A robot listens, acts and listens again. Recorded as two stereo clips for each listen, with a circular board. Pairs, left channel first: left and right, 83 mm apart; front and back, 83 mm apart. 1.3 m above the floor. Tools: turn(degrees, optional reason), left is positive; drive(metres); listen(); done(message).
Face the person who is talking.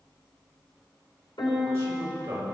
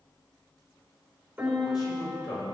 turn(degrees=-35, reason="The man speaking: 35° right.")
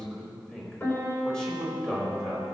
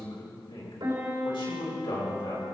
turn(degrees=10, reason="The man speaking is now 10° left.")
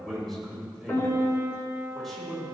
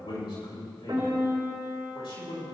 done("Facing the man speaking.")